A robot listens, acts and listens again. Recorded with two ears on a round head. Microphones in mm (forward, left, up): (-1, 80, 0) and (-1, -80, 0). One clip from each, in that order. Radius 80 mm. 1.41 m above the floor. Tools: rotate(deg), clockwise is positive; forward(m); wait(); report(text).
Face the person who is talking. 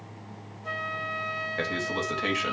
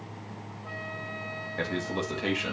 rotate(-25)
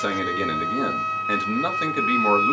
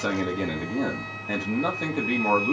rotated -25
rotate(-130)
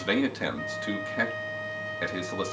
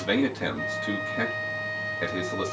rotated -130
rotate(-25)
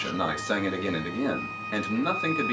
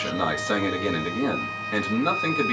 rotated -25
report("Found it: a man speaking, straight ahead, 2 to 4 m away.")